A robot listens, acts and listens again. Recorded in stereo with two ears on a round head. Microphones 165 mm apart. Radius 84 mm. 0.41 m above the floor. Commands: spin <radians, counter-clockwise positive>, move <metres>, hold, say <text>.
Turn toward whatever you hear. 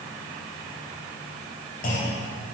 spin 0.79
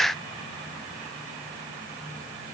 hold
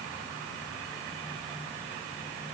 say I heard a clunk, but can't make it out now. It was about straight ahead or 90° left.